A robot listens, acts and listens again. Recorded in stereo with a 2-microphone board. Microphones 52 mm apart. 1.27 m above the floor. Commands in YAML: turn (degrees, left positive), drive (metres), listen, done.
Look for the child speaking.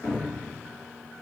listen: true
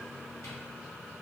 listen: true
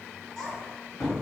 turn: 30
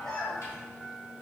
turn: 30
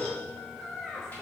turn: 15
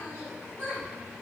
turn: 25
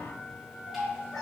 turn: 130
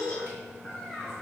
done: "Facing the child speaking, 2 to 4 m away."